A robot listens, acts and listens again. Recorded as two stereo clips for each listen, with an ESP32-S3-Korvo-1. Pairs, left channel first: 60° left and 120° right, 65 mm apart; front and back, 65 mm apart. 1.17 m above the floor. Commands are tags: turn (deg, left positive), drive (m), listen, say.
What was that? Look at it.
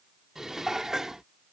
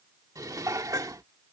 <turn deg="160"/>
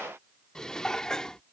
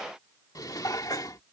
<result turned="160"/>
<turn deg="-20"/>
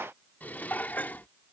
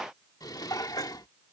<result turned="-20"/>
<say>Facing the dishes clattering.</say>